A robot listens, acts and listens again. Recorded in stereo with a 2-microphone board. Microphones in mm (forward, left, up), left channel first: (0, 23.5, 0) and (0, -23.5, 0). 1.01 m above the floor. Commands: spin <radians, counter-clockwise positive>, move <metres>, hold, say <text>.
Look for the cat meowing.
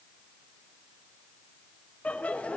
hold
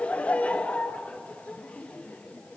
hold
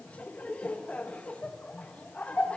say I can't make out a cat meowing to turn to.